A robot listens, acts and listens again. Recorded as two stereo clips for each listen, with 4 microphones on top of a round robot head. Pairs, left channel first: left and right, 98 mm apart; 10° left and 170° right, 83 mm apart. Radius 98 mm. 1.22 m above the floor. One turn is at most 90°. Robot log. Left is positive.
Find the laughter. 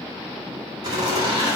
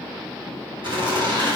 note: The laughter: 145° right.
cmd yaw -90
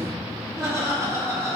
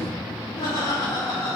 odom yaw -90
note: The laughter is now 30° right.
cmd yaw -30
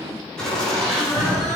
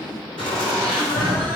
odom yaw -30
end: Facing the laughter, 2 to 4 m away.